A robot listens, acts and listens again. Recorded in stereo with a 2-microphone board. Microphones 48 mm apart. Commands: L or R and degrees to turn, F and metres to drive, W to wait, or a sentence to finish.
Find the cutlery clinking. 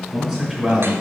W
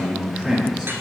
W
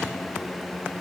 I can't make out cutlery clinking, only a man speaking.